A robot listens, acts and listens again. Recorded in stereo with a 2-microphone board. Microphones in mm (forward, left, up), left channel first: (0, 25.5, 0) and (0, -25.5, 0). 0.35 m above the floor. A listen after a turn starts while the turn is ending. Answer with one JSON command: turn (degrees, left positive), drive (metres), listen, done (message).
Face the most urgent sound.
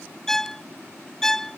{"listen": true}
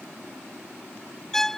{"listen": true}
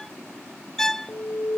{"turn": 40}
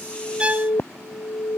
{"turn": 100}
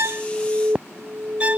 {"turn": -25}
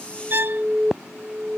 {"turn": -10}
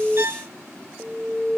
{"done": "Facing the alarm."}